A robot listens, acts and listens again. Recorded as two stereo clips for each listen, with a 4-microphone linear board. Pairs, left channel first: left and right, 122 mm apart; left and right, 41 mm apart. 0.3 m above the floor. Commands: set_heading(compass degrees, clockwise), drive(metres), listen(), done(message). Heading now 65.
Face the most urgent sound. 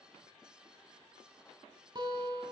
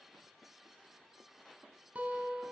listen()
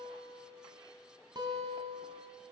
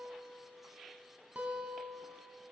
listen()
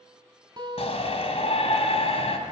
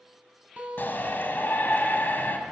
set_heading(5)
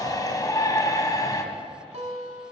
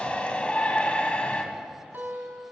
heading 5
set_heading(330)
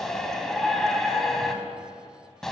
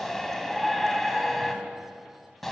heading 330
done("Found it: a shout, straight ahead, 1 to 2 m away.")